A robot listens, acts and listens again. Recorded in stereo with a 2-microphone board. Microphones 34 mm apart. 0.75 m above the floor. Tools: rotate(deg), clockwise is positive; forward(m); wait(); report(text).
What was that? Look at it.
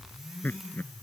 rotate(-90)
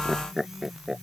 rotate(10)
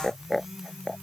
report("Facing the laughter.")